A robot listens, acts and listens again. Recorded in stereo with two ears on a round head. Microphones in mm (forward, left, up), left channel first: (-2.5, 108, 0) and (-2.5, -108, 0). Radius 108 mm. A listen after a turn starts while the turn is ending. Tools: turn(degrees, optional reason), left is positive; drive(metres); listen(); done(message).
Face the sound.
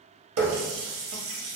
turn(degrees=-60, reason="The running tap: about 60° right or 120° right.")
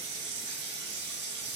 turn(degrees=-50, reason="So it is at 50° right.")
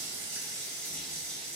done("Facing the running tap.")